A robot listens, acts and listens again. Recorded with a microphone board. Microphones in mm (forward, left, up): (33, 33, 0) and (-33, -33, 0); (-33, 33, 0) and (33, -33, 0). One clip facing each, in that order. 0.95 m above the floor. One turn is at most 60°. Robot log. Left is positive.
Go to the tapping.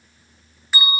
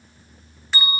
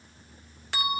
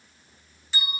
cmd idle
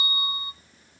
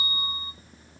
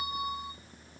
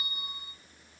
cmd idle
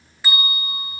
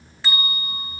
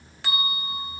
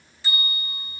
end: I can't make out tapping to turn to.